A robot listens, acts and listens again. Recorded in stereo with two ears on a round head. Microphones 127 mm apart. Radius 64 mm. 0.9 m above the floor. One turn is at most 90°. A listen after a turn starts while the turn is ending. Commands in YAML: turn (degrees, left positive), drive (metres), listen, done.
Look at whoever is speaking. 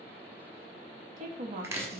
turn: -55
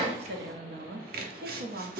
turn: -70
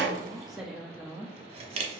done: "Found it: a woman speaking, straight ahead."